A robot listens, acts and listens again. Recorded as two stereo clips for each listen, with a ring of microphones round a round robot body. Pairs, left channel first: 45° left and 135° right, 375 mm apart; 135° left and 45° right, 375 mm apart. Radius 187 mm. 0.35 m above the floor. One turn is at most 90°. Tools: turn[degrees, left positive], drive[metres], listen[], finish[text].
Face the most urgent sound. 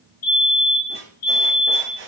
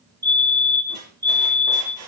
Thought: The fire alarm: 35° left.
Action: turn[35]
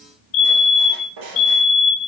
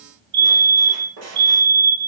Thought: The fire alarm is now 15° left.
Action: turn[15]
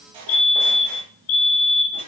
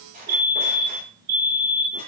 Action: finish[Found it: a fire alarm, straight ahead.]